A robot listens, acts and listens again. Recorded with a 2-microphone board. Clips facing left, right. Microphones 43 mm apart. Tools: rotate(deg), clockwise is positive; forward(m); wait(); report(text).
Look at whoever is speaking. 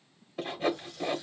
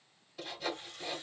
wait()
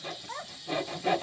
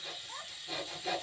rotate(-90)
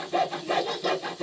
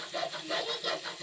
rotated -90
wait()
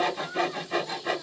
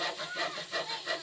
report("Found it: a child speaking, straight ahead.")